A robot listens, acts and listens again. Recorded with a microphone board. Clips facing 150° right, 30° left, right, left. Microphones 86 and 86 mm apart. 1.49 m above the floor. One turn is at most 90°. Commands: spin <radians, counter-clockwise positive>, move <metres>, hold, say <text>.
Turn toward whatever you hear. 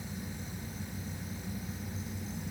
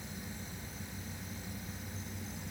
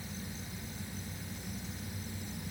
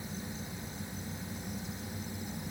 hold
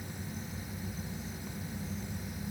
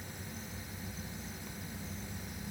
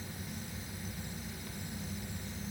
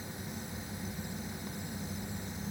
hold
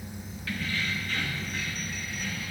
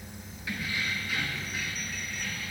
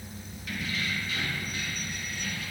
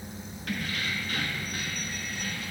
spin 1.57
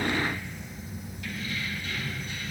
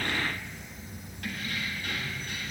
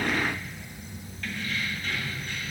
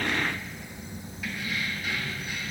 spin 0.17
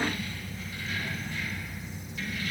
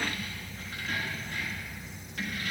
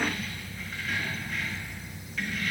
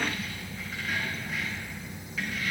say Facing the keys jangling.